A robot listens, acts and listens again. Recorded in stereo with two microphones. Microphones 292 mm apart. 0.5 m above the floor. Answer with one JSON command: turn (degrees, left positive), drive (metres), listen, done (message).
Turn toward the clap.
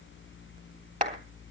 {"turn": -25}
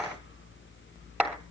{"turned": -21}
{"done": "Found it: a clap, straight ahead, 2 to 4 m away."}